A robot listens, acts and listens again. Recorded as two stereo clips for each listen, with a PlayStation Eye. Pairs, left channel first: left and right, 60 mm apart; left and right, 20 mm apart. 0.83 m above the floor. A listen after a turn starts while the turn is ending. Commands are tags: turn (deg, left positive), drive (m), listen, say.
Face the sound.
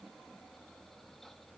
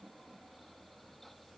<listen/>
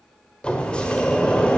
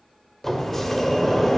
<turn deg="20"/>
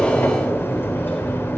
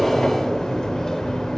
<turn deg="140"/>
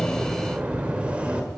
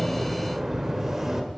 <turn deg="-20"/>
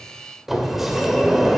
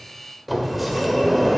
<say>Found it: a sliding door, straight ahead.</say>